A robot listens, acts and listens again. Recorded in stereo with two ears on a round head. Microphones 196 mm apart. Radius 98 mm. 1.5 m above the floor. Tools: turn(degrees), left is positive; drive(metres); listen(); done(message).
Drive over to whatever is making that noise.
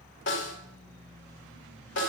turn(degrees=55)
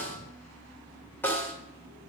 turn(degrees=10)
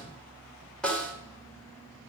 drive(metres=1.0)
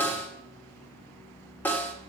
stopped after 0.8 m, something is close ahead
turn(degrees=15)
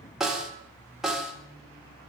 done("Arrived at the snare drum, straight ahead.")